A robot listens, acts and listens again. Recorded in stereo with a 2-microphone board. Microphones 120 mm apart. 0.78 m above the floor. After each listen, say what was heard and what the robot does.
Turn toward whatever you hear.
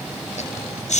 Turn 90° left.
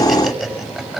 Found it: laughter, straight ahead.